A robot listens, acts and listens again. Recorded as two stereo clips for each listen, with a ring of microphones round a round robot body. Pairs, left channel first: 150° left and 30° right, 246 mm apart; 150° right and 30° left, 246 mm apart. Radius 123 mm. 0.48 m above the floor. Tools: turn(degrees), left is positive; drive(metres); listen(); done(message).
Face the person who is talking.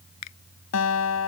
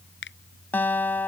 listen()
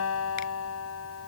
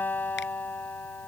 listen()
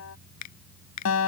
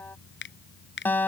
done("I can't make out anyone speaking, only a guitar and a finger snap.")